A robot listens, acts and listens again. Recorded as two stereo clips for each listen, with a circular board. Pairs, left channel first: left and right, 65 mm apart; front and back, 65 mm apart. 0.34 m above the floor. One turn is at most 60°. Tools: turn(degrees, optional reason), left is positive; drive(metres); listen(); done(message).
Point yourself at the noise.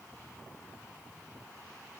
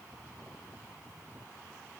listen()
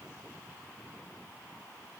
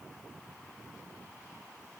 listen()
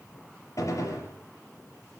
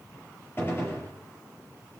turn(degrees=55, reason="The gunshot: 55° left.")
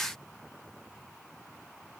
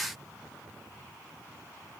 done("I heard a gunshot from this way, but can't make it out now.")